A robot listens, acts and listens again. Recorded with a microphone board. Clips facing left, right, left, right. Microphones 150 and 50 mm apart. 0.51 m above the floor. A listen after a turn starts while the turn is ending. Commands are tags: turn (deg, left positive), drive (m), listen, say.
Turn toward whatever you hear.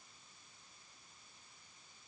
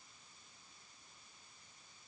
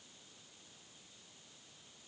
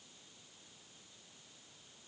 <listen/>
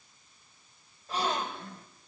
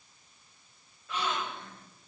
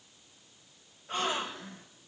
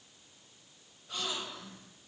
<turn deg="35"/>
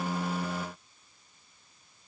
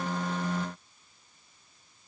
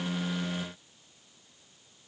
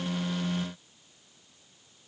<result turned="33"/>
<listen/>
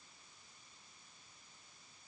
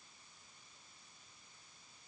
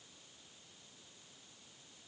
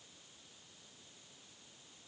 <say>I heard a gasp, but can't make it out now. It was about straight ahead or 110° left.</say>